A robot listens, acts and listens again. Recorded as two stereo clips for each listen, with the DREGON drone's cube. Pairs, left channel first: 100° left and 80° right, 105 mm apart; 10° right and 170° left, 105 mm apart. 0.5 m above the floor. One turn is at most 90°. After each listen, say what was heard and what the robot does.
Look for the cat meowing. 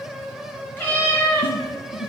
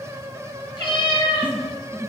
The cat meowing: 30° left. Turn 30° left.
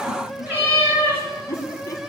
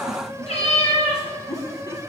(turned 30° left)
The cat meowing is now 10° right. Turn 10° right.
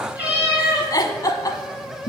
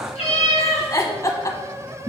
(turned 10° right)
Facing the cat meowing.